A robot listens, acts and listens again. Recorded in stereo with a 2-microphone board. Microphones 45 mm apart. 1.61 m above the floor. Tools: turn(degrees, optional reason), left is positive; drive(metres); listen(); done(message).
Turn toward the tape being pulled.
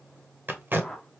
turn(degrees=-45, reason="The tape being pulled: about 45° right or 135° right.")
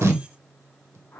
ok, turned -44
turn(degrees=-90, reason="So it is at 90° right.")
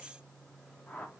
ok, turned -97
listen()
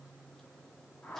listen()
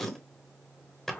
done("Found it: tape being pulled, straight ahead.")